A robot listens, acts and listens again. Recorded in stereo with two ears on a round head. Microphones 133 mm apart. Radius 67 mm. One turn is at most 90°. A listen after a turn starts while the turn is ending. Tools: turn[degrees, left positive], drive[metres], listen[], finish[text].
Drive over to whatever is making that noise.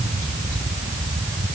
Action: listen[]
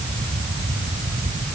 Action: listen[]
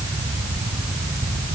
Action: finish[I can't make out anything to turn to.]